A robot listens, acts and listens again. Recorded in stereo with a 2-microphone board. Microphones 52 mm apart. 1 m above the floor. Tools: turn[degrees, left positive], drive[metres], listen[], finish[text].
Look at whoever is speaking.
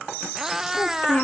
Thought: The child speaking: about 40° left or 140° left.
Action: turn[40]
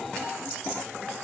Action: listen[]
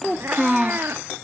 Action: finish[Facing the child speaking, under 1 m away.]